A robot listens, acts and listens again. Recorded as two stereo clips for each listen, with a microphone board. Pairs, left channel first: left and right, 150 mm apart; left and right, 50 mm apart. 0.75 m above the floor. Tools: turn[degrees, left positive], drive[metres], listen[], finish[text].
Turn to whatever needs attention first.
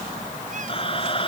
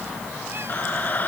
Thought: The scream: about 35° left or 145° left.
Action: turn[35]
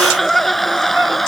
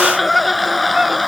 Action: finish[Facing the scream.]